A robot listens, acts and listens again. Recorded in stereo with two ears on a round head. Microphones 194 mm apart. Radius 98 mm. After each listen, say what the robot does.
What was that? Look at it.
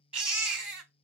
Turn 30° right.
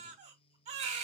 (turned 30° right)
Turn 145° right.
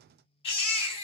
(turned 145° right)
Turn 30° left.
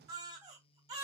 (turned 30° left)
Turn 20° right.
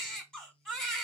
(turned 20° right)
Found it: a baby crying, straight ahead.